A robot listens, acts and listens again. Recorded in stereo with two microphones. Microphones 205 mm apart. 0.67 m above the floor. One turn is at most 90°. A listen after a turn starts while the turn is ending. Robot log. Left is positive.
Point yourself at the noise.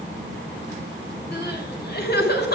note: The crying: about 50° left or 130° left.
cmd yaw +50
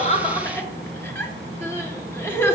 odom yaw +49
note: So it is at 15° left.
cmd yaw +15
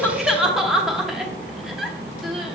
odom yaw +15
end: Facing the crying, under 1 m away.